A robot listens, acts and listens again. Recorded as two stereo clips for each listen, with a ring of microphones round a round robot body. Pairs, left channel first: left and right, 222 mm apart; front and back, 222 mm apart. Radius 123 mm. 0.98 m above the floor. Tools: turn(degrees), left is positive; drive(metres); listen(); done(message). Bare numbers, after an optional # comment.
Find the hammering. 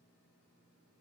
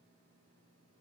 listen()
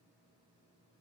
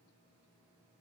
listen()
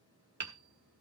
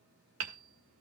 # The hammering: 140° right.
turn(-140)
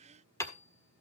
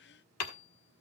# The hammering is now 10° left.
turn(10)
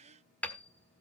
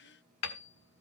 done("Facing the hammering.")